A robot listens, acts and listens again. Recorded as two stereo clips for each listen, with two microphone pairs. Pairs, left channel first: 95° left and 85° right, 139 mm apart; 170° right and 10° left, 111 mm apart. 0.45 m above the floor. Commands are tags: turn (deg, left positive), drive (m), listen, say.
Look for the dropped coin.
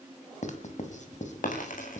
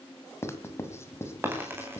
<turn deg="80"/>
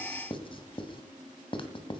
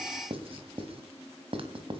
<say>I heard a dropped coin from this way, but can't make it out now.</say>